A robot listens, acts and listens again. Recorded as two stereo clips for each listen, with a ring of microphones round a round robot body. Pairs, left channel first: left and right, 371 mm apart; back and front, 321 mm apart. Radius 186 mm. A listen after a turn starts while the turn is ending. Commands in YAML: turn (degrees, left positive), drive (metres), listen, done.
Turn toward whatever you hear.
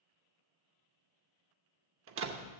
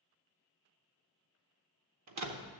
turn: -40
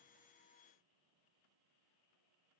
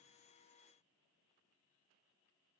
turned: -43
done: "I heard a door slam from this way, but can't make it out now."